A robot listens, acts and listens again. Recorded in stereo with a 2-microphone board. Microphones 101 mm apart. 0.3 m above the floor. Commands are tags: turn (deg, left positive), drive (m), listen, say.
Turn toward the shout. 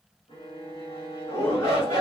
<turn deg="45"/>
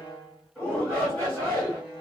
<turn deg="10"/>
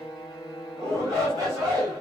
<say>Found it: a shout, straight ahead.</say>